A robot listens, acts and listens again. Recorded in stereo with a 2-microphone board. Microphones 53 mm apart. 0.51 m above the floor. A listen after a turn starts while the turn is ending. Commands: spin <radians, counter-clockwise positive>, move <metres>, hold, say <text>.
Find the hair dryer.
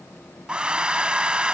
spin -0.35
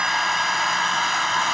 say Facing the hair dryer.